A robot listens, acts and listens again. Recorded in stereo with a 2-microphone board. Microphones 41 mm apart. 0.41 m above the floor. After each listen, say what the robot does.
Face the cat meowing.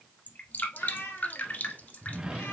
Turn 90° left.
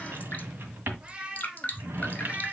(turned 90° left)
Turn 30° right.
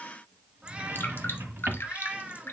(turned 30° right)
Turn 20° right.
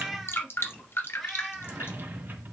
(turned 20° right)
Facing the cat meowing.